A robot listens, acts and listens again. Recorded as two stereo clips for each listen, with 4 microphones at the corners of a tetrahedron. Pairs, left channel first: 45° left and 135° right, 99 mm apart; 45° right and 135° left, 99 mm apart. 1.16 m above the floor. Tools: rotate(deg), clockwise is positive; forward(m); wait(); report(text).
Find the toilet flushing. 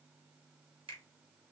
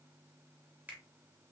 wait()
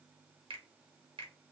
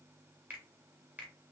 wait()
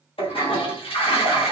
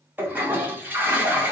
rotate(-65)
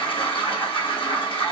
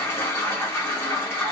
rotate(-20)
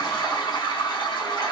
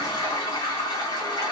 report("Found it: a toilet flushing, straight ahead, 1 to 2 m away.")